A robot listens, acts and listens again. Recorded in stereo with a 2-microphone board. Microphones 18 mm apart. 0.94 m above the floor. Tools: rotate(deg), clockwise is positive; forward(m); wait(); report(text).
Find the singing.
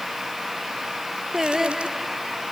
rotate(25)
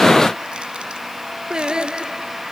rotate(130)
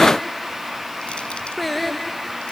rotate(-10)
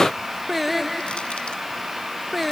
report("Found it: singing, straight ahead.")